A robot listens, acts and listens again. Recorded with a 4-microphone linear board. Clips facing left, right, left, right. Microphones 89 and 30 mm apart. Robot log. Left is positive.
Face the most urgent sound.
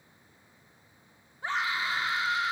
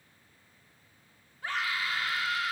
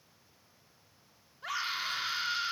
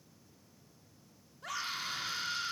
note: The scream: about 25° left or 155° left.
cmd yaw +25
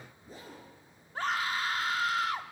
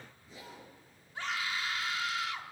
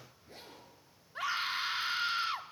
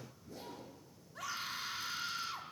note: So it is at 125° left.
cmd yaw +125
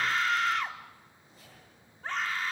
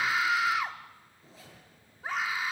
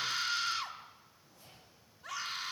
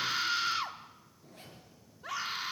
note: The scream is now 10° right.
cmd yaw -10
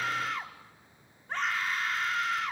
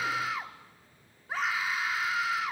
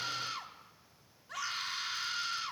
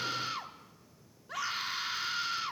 end: Facing the scream, 1 to 2 m away.